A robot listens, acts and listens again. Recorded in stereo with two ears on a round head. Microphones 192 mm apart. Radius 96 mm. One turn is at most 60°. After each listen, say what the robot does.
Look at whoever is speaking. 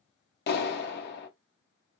Keep listening.
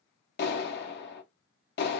Keep listening.
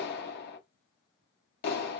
I can't make out anyone speaking, only a clap.